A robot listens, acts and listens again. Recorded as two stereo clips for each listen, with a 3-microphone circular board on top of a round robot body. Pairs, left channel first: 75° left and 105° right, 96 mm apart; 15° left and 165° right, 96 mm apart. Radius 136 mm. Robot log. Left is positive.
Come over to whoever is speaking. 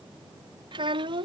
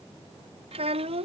note: The child speaking: 145° right.
cmd yaw -145
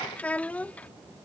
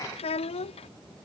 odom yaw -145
cmd fwd 1.0
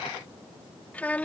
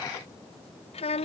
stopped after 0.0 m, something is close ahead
end: Blocked. The child speaking is further on, straight ahead.